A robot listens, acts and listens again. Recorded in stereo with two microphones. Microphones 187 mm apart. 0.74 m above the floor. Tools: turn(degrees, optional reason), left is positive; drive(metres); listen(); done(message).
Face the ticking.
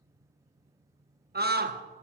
listen()
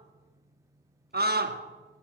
listen()
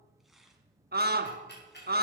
turn(degrees=65, reason="The ticking: about 65° left or 115° left.")
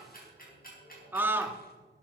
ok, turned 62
turn(degrees=50, reason="So it is at 50° left.")
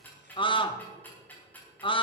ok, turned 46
turn(degrees=10, reason="The ticking is now 10° left.")
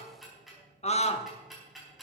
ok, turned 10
done("Facing the ticking, over 4 m away.")